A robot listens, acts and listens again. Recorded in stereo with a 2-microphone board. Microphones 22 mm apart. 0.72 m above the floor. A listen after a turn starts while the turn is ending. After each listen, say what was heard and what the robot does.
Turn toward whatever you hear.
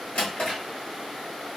Turn 90° left.
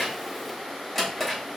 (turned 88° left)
So it is at 15° left. Turn 15° left.
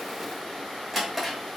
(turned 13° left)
Found it: a drawer, straight ahead.